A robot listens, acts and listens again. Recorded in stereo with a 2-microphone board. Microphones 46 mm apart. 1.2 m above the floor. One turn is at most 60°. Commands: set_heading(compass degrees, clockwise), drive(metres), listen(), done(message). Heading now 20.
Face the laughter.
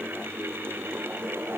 listen()
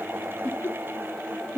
set_heading(320)
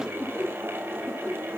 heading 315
set_heading(265)
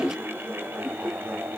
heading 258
set_heading(248)
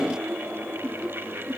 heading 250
done("Found it: laughter, straight ahead.")